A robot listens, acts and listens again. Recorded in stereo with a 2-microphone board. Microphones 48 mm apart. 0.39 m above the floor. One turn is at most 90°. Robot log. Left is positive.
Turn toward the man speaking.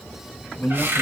note: The man speaking: about 30° left or 150° left.
cmd yaw +30
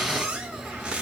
cmd idle
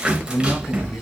note: So it is at 115° left.
cmd yaw +90
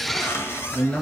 note: The man speaking is now 30° left.
cmd yaw +30
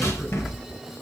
cmd idle
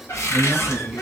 end: Found it: a man speaking, straight ahead, 1 to 2 m away.